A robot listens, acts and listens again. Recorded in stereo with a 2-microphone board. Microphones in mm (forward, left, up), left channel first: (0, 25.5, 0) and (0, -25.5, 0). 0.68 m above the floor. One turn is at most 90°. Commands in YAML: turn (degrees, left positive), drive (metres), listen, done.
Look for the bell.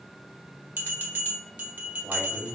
turn: -35
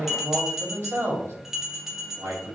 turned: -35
done: "Found it: a bell, straight ahead, 1 to 2 m away."